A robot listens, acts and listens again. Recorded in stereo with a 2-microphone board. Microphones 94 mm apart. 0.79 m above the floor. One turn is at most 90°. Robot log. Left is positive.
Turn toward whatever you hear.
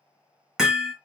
cmd yaw -30
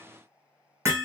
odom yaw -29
note: So it is at 145° right.
cmd yaw -90
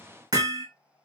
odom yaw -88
note: The hammering is now 55° right.
cmd yaw -55
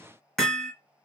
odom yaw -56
end: Found it: hammering, straight ahead, 1 to 2 m away.